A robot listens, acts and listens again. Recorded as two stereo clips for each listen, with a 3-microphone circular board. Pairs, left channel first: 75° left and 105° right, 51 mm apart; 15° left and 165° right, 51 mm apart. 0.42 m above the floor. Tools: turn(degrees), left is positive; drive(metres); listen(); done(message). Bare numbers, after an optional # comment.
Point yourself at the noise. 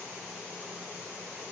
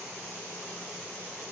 listen()
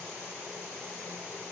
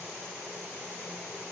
listen()
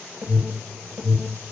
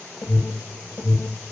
# The alarm: 40° right.
turn(-40)
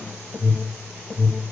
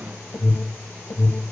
done("Facing the alarm, over 4 m away.")